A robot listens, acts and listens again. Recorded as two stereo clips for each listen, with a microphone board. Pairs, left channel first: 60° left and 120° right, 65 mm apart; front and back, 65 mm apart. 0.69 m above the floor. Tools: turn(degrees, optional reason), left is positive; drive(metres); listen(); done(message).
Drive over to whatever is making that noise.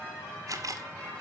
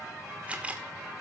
turn(degrees=-115, reason="The camera shutter: 115° right.")
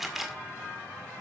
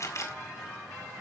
turn(degrees=-35, reason="The camera shutter is now 35° right.")
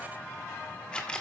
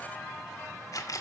turn(degrees=-15, reason="The camera shutter is now 15° right.")
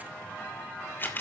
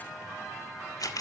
drive(metres=1.0)
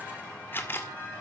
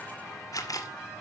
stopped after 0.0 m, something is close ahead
done("Blocked. The camera shutter is further on, straight ahead.")